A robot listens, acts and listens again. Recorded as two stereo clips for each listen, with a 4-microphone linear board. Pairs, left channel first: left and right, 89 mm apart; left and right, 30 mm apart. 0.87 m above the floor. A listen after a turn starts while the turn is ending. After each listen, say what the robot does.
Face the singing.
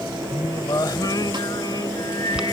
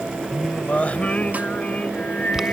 Turn 50° left.
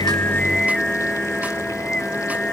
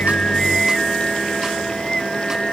Turn 10° left.
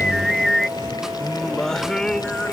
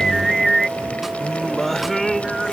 Turn 10° left.
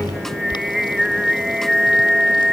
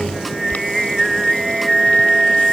Facing the singing.